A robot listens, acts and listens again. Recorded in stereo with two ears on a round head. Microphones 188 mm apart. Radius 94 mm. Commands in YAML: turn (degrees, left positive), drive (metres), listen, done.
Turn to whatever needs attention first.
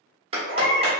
turn: 55
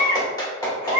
turn: 25
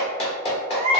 turn: 10
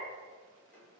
listen: true
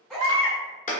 done: "Facing the baby crying, 1 to 2 m away."